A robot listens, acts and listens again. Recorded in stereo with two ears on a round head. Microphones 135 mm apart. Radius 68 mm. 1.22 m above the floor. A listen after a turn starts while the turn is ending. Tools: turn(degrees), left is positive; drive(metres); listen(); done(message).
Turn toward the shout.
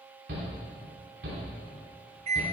turn(degrees=-90)
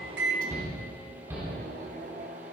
turn(degrees=-15)
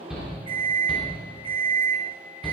done("Found it: a shout, straight ahead, 2 to 4 m away.")